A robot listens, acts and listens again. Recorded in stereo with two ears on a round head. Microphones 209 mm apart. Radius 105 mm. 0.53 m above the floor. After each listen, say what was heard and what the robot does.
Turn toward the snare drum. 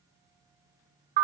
Keep listening.
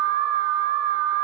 Keep listening.
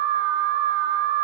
I can't make out a snare drum to turn to.